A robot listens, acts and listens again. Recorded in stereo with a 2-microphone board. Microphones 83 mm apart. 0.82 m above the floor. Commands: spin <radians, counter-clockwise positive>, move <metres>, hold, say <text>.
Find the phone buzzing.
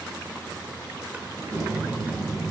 spin 0.52
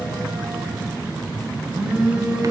spin -0.26
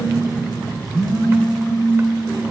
say Facing the phone buzzing, 2 to 4 m away.